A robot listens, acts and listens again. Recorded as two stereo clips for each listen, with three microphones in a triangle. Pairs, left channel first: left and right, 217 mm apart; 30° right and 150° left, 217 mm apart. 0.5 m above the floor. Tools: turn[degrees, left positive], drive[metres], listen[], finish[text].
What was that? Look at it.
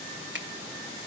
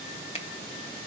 Thought: The finger snap: 85° right.
Action: turn[-85]
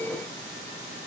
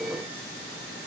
Action: listen[]
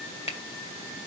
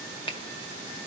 Thought: The finger snap is now 35° left.
Action: turn[35]
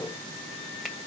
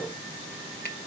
Action: listen[]
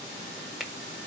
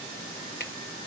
Action: finish[Found it: a finger snap, straight ahead, 1 to 2 m away.]